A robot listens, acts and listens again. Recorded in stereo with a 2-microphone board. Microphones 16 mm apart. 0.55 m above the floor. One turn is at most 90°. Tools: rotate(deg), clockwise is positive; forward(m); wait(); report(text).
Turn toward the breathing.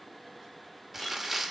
wait()
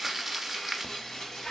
rotate(-60)
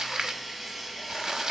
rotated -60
wait()
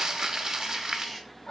rotate(-55)
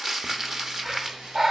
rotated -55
rotate(25)
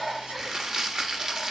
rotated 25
report("Found it: breathing, straight ahead.")